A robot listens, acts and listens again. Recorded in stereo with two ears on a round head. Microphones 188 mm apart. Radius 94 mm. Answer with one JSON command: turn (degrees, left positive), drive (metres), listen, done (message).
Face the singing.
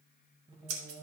{"turn": -20}
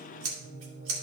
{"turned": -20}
{"turn": -30}
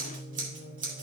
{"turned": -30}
{"turn": -130}
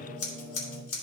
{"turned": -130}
{"done": "Found it: singing, straight ahead, over 4 m away."}